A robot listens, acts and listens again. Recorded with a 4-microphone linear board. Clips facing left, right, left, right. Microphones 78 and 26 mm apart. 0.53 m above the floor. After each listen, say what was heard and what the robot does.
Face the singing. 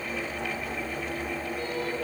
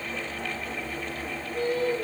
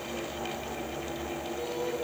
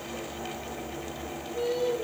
Turn 90° right.
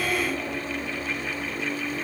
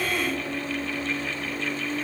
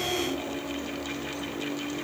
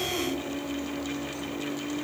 Facing the singing, over 4 m away.